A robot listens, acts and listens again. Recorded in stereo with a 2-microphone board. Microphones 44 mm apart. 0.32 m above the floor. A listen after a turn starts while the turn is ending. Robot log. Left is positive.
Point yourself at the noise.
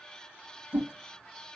note: The whoosh: about 60° right or 120° right.
cmd yaw -60
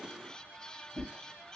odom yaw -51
note: So it is at 25° right.
cmd yaw -25
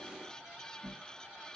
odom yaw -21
end: Facing the whoosh.